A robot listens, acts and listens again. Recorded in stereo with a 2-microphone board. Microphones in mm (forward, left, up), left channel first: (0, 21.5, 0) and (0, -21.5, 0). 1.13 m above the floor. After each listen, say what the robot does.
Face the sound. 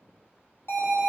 Turn 90° left.
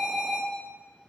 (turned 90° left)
Facing the alarm, 2 to 4 m away.